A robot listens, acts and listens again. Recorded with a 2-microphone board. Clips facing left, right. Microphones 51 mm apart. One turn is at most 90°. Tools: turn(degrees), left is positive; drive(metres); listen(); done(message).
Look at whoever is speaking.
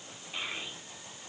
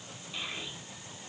turn(degrees=30)
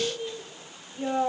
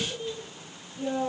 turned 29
turn(degrees=90)
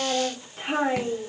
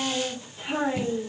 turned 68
turn(degrees=50)
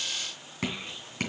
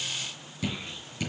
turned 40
turn(degrees=10)
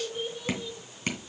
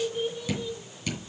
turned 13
done("Found it: a child speaking, straight ahead, 2 to 4 m away.")